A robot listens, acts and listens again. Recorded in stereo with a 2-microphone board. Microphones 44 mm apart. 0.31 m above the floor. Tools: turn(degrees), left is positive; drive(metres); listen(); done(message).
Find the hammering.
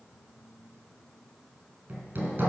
turn(degrees=-60)
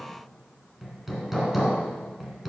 done("Facing the hammering, 2 to 4 m away.")